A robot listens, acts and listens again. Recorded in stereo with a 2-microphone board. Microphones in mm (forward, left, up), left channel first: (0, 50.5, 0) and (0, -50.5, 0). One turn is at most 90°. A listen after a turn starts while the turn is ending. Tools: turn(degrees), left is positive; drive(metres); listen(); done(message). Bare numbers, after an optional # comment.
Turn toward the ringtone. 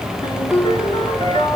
# The ringtone: about 75° left or 105° left.
turn(75)
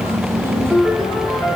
# So it is at 35° left.
turn(35)
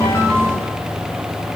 listen()
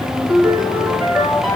done("Found it: a ringtone, straight ahead, over 4 m away.")